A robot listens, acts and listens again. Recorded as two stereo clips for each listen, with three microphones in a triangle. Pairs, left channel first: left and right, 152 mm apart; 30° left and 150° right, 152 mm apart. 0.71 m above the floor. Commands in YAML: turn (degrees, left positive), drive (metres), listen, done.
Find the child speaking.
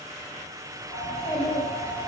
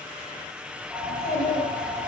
turn: 25
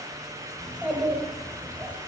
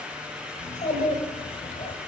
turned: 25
turn: -10
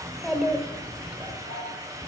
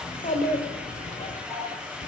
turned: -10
done: "Facing the child speaking, 1 to 2 m away."